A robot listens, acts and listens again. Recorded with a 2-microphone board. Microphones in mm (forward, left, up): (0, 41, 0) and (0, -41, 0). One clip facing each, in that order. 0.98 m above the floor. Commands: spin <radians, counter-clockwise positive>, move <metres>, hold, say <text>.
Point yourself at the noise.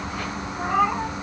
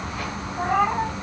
spin -0.79
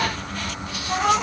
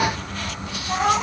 spin -0.26
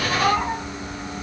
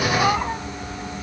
spin -0.17
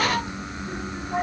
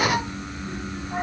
spin -0.17
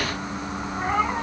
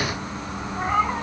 say Found it: a cat meowing, straight ahead.